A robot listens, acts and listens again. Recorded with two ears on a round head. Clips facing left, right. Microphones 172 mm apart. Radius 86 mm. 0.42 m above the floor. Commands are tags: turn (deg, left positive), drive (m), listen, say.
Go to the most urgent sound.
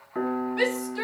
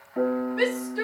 <turn deg="45"/>
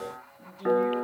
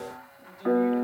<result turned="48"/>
<drive m="1.0"/>
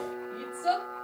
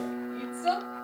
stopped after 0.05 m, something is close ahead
<say>Something is in my way. I am facing the shout but have not reached it.</say>